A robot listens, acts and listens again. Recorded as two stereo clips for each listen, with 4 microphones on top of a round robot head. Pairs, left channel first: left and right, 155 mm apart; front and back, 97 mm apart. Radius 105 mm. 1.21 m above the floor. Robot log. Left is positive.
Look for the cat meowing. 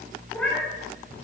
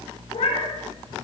end: Found it: a cat meowing, straight ahead, 2 to 4 m away.